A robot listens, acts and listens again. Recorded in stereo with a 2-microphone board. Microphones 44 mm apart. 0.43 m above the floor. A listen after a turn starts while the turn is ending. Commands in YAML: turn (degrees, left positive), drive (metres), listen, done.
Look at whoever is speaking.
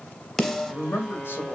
turn: 60
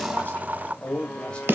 turn: 25
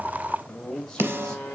turn: 10
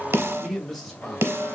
done: "Facing the man speaking."